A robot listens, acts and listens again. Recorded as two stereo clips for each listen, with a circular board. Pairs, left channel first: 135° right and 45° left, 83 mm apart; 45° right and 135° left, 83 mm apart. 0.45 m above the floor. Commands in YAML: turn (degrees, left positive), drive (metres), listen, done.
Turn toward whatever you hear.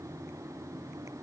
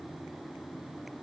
listen: true
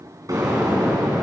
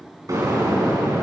turn: 90
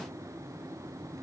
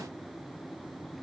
done: "Facing where the explosion came from. I can't hear it now."